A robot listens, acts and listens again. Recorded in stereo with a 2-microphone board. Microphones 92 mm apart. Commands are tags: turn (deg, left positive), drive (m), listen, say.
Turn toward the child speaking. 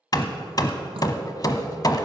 <listen/>
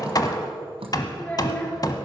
<turn deg="20"/>
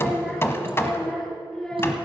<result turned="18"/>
<turn deg="30"/>
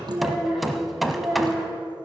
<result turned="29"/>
<turn deg="-10"/>
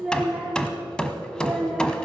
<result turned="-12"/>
<say>Found it: a child speaking, straight ahead, over 4 m away.</say>